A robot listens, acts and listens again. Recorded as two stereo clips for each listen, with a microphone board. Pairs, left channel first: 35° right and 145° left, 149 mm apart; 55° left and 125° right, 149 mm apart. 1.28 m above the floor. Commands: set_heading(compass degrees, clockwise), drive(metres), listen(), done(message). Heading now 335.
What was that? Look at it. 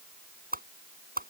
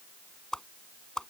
set_heading(195)
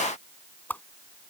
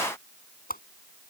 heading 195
set_heading(150)
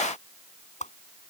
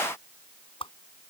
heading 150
done("Found it: a whoosh, straight ahead.")